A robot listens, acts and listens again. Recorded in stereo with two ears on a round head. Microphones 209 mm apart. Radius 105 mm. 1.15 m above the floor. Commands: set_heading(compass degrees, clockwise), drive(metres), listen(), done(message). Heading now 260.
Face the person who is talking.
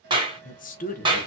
set_heading(225)
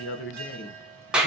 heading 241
set_heading(111)
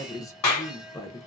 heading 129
set_heading(114)
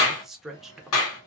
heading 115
done("Facing the woman speaking, under 1 m away.")